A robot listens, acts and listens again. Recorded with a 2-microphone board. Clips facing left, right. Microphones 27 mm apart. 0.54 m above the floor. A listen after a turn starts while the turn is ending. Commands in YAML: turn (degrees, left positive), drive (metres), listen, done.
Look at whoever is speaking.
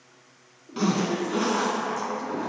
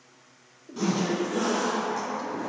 turn: -25
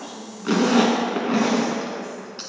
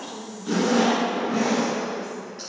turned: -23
turn: -125
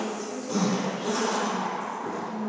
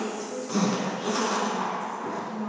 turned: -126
done: "Facing the woman speaking, 1 to 2 m away."